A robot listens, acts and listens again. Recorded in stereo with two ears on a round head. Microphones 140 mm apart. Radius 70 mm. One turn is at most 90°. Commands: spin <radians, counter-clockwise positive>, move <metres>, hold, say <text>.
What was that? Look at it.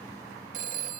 spin -1.05
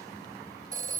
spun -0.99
spin -0.52
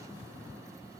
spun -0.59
hold
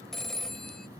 say Found it: a phone ringing, straight ahead.